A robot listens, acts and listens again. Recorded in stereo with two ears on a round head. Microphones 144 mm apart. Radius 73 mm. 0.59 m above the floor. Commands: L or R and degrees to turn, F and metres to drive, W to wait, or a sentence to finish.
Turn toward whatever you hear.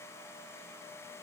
W
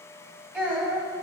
R30
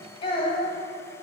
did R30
L35
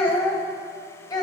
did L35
L25
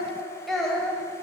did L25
Facing the child speaking, 1 to 2 m away.